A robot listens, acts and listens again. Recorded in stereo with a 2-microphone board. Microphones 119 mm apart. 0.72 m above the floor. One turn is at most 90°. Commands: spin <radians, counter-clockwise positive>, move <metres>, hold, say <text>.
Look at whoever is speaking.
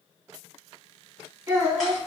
spin -0.44
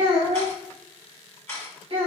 spin -1.57
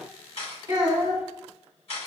spin -0.61
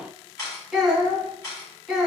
say Found it: a child speaking, straight ahead, 1 to 2 m away.